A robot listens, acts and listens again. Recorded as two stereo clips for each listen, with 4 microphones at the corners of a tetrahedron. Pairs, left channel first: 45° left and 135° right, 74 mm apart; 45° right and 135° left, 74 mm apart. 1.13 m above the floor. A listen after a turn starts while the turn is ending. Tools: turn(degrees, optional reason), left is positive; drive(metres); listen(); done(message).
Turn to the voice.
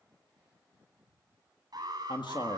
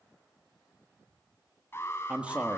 turn(degrees=60, reason="The man speaking: 60° left.")
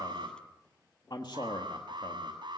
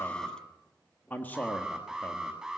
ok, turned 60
turn(degrees=20, reason="The man speaking is now 20° left.")
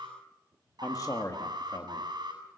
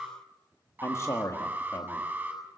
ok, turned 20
done("Found it: a man speaking, straight ahead, 1 to 2 m away.")